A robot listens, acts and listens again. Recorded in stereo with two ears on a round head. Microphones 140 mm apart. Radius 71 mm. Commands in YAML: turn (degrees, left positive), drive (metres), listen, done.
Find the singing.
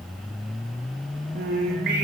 turn: -55
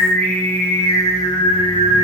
turn: 40
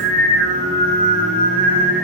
turn: 40
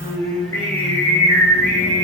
turn: 20
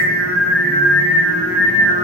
turn: 10
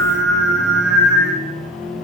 done: "Facing the singing."